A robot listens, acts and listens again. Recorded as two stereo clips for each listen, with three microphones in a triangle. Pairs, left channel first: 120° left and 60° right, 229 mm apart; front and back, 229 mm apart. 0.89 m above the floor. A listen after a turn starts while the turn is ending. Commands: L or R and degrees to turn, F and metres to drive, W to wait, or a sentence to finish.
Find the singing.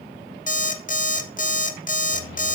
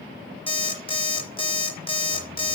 W
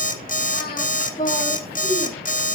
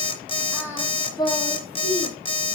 L55
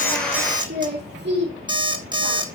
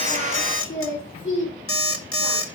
R25
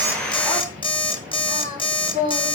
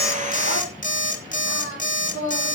Facing the singing, 2 to 4 m away.